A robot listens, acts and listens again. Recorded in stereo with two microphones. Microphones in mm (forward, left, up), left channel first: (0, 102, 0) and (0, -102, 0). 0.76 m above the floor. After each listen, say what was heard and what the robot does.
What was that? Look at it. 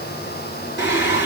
The singing: about 60° left or 120° left. Turn 60° left.
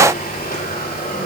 So it is at 45° left. Turn 45° left.
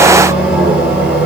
Found it: singing, straight ahead, 2 to 4 m away.